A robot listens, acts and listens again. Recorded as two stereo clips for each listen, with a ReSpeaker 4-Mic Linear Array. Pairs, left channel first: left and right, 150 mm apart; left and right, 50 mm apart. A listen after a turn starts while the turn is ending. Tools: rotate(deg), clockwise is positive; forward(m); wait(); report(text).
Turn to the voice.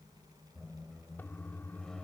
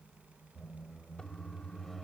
wait()
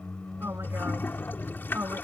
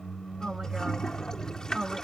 rotate(15)
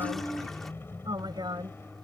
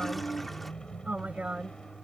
rotate(150)
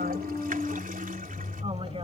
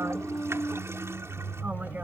wait()
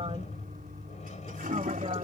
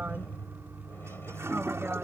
wait()
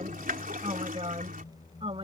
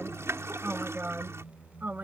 rotate(40)
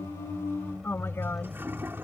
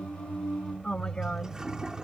rotate(-15)
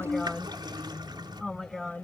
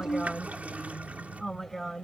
report("Found it: a woman speaking, straight ahead.")